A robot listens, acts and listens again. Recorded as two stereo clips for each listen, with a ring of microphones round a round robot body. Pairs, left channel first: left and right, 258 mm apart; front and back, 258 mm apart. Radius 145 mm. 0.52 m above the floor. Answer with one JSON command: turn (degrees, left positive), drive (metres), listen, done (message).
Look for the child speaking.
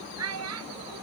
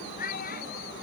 {"turn": -60}
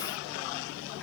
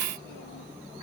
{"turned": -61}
{"listen": true}
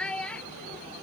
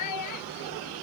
{"done": "Facing the child speaking."}